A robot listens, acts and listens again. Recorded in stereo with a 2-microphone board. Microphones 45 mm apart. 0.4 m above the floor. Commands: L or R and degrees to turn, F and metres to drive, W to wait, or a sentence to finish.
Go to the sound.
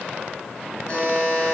L20
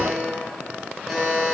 F1.0
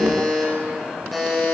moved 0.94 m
F1.0
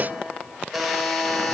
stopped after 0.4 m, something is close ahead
I am next to the buzzer.